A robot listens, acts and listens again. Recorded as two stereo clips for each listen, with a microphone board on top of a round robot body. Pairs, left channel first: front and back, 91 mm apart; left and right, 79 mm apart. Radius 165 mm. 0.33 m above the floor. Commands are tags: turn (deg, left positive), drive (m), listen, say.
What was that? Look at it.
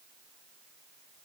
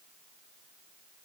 <listen/>
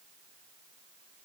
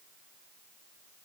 <listen/>
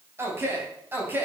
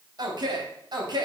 <turn deg="-110"/>
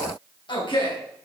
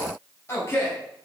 <turn deg="35"/>
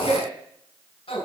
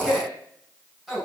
<say>Found it: a man speaking, straight ahead.</say>